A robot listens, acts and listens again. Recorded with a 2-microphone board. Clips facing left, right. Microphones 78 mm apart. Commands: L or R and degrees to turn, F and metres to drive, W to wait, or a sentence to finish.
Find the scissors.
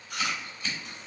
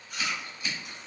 R30
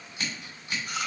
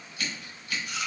L25
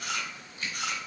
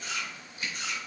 R10
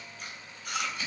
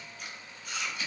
Facing the scissors.